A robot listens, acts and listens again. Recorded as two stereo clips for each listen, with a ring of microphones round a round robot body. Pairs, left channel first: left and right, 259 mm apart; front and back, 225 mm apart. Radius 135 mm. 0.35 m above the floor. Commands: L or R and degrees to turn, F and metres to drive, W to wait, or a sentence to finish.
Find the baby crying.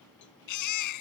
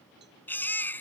L80
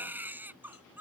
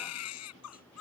Found it: a baby crying, straight ahead.